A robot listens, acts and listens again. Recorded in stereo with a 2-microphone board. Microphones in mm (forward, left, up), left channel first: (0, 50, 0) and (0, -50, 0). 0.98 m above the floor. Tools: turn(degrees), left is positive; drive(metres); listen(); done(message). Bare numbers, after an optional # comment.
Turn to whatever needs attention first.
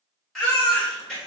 turn(30)
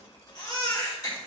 # So it is at 145° left.
turn(145)
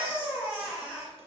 # The baby crying is now 10° right.
turn(-10)
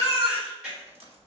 done("Facing the baby crying.")